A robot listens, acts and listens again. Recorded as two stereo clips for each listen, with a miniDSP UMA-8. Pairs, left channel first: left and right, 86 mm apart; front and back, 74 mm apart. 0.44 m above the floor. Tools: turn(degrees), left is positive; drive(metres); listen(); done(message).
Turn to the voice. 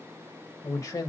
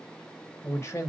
turn(degrees=45)
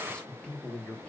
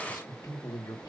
turn(degrees=15)
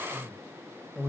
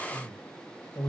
done("Found it: a man speaking, straight ahead.")